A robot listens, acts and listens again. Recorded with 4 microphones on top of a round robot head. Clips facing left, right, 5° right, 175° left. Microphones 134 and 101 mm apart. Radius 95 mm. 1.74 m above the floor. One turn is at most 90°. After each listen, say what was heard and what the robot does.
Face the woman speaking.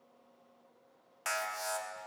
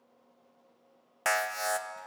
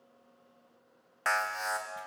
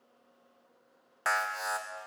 Keep listening.
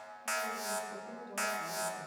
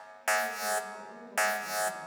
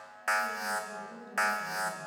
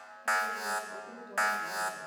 The woman speaking: 140° left. Turn 90° left.
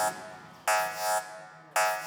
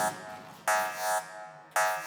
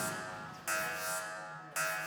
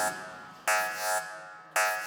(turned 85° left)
Nothing new. It was at 55° left. Turn 55° left.
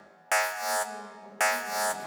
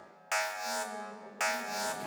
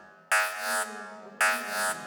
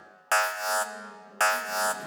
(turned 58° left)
The woman speaking is now 10° right. Turn 10° right.
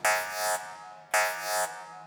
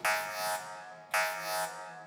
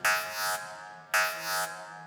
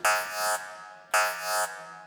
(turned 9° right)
Keep listening.
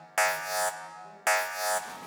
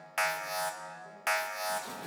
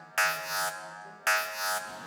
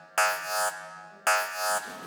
Keep listening.
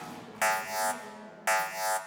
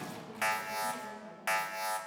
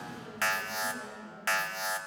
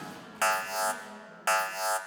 Facing the woman speaking.